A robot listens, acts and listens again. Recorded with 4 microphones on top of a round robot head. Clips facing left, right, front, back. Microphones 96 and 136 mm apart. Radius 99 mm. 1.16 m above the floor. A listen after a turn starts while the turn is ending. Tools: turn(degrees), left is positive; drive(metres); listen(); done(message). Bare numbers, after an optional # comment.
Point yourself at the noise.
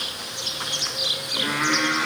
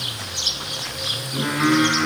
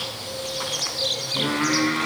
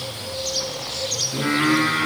# The singing: 145° right.
turn(-145)
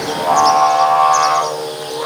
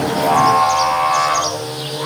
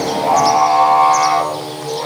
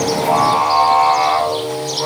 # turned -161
# The singing is now 45° left.
turn(45)
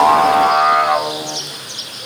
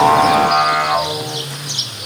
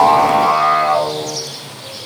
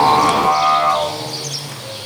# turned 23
# The singing is now 30° left.
turn(30)
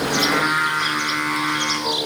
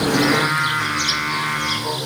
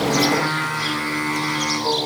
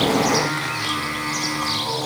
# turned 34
done("Facing the singing, over 4 m away.")